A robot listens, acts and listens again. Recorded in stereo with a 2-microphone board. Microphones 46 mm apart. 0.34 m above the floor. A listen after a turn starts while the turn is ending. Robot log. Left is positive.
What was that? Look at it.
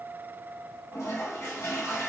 cmd yaw +90
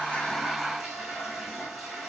note: So it is at 15° right.
cmd yaw -15
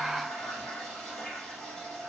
end: Found it: a toilet flushing, straight ahead, 1 to 2 m away.